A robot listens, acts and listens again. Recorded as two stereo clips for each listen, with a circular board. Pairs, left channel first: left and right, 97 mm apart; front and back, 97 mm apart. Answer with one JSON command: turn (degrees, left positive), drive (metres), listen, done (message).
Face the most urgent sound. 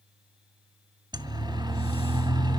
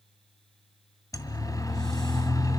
{"turn": -50}
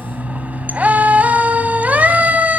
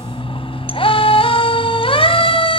{"turn": -15}
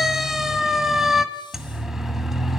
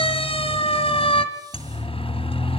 {"done": "Facing the siren."}